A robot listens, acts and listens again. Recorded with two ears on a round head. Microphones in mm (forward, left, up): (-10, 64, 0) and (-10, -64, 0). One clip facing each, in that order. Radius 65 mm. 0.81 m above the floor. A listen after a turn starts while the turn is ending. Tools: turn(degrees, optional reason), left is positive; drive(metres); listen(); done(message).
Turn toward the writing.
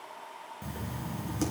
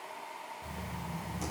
turn(degrees=90)
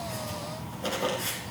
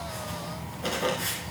done("Found it: writing, straight ahead.")